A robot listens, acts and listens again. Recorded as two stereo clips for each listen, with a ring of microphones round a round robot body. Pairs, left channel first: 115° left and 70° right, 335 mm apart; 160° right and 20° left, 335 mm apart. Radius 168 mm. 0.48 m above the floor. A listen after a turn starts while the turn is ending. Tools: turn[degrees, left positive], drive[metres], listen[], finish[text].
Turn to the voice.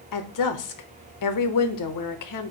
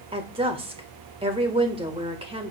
Thought: The woman speaking: 95° left.
Action: turn[95]
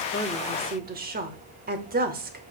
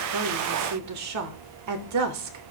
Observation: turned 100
Action: finish[Found it: a woman speaking, straight ahead, 1 to 2 m away.]